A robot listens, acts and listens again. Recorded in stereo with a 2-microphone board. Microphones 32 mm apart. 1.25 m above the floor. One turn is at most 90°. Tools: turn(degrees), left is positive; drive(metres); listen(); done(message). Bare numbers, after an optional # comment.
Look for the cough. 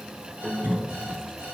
turn(-90)
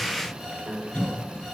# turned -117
# So it is at 40° left.
turn(40)
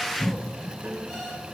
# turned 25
# The cough is now 15° left.
turn(15)
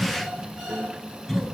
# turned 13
done("Facing the cough, 2 to 4 m away.")